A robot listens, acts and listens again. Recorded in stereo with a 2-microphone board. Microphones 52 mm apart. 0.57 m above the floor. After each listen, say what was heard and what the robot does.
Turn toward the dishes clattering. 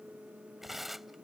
Keep listening.
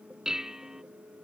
Turn 30° right.
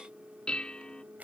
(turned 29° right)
So it is at 15° left. Turn 15° left.
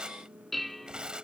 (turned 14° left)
Found it: dishes clattering, straight ahead.